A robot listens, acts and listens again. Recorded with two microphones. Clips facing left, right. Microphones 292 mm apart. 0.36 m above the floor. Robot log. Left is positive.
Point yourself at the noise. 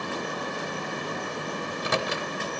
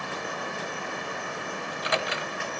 note: The microwave: about 50° left or 130° left.
cmd yaw +50
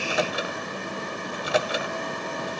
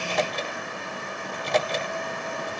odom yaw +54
note: So it is at 10° left.
cmd yaw +10
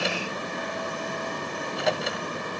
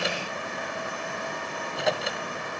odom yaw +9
end: Facing the microwave, 1 to 2 m away.